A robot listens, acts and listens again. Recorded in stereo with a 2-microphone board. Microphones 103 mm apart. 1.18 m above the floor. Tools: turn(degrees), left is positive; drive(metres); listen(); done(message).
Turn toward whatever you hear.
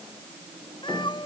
turn(degrees=50)
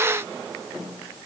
listen()
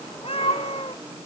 turn(degrees=70)
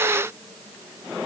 listen()
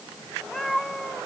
done("Facing the cat meowing.")